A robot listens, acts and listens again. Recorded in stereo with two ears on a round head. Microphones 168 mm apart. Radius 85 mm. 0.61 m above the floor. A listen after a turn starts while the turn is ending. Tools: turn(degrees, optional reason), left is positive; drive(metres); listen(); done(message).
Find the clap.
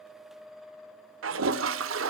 listen()
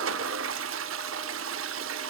listen()
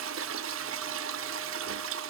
done("I can't make out a clap, only a toilet flushing.")